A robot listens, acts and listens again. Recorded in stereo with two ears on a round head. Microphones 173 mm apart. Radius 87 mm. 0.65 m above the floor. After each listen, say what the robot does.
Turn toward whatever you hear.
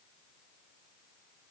Keep listening.
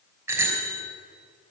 Turn 30° right.
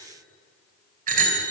Turn 135° right.
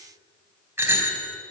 Turn 10° right.
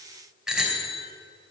Facing the bicycle bell.